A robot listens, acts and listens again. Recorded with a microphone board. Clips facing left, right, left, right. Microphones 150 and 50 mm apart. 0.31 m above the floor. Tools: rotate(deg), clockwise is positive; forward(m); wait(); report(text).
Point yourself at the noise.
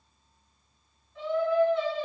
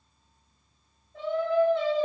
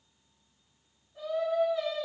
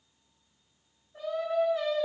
rotate(45)
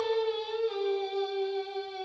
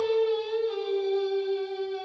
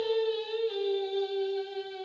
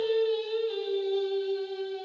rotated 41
rotate(-25)
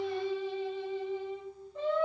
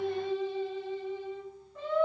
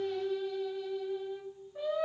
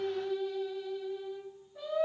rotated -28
rotate(-25)
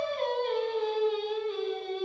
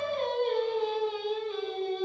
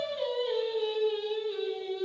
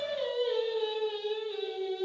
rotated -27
report("Facing the singing, 1 to 2 m away.")